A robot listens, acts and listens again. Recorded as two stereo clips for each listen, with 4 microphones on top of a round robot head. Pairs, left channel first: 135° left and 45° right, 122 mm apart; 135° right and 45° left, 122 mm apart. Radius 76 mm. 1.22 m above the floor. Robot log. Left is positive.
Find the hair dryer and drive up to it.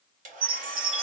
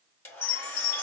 note: The hair dryer: 60° right.
cmd yaw -60
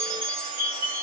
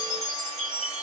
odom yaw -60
cmd idle
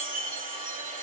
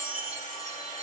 note: The hair dryer is now 10° right.
cmd yaw -10
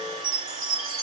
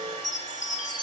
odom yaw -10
cmd fwd 1.0
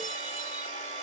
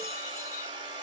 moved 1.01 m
note: The hair dryer is now 10° right.
cmd yaw -10
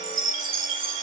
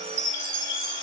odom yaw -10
cmd idle
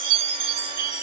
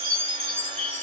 cmd idle
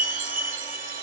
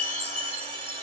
end: I heard a hair dryer from this way, but can't make it out now. I did not reach it.